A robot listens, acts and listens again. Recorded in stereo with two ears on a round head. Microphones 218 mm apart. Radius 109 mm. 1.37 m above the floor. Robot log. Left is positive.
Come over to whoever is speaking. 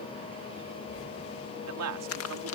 note: The man speaking: about 70° right or 110° right.
cmd yaw -70
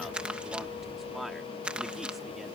cmd idle
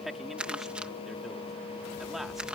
cmd fwd 1.0
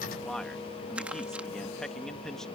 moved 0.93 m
cmd fwd 1.0
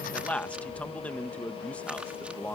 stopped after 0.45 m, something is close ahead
end: I am next to the man speaking.